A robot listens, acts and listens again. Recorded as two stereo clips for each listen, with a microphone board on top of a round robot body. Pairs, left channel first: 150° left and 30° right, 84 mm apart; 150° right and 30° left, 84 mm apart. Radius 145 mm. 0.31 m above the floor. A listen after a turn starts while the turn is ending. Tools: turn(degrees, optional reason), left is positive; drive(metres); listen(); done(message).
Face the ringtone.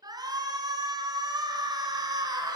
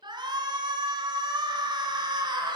listen()
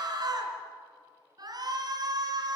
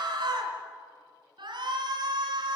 listen()
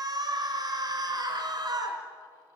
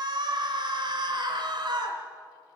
done("I can't make out a ringtone to turn to.")